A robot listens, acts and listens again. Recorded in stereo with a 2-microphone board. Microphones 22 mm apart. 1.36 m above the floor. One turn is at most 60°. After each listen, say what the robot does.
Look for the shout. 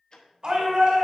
Turn 45° right.
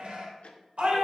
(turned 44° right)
Turn 60° right.
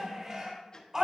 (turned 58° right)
Turn 35° right.
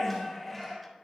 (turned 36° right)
Facing the shout, 2 to 4 m away.